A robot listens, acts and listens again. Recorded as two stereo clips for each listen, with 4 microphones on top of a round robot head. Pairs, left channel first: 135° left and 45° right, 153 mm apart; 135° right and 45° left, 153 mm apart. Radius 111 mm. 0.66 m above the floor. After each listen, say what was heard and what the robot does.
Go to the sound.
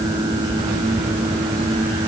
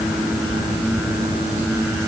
Keep listening.
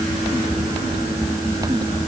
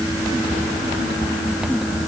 Keep listening.
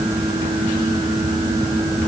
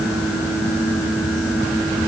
I can't make out anything to turn to.